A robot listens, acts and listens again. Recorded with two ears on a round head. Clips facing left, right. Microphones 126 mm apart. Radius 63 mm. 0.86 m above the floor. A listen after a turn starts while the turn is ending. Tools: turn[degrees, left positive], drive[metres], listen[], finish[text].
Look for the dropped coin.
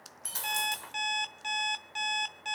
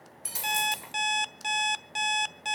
Action: turn[-30]
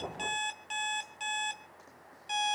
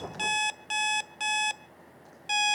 Action: listen[]
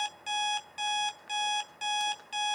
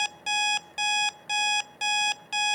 Action: finish[I heard a dropped coin, but can't make it out now. It was about 15° left or 135° right.]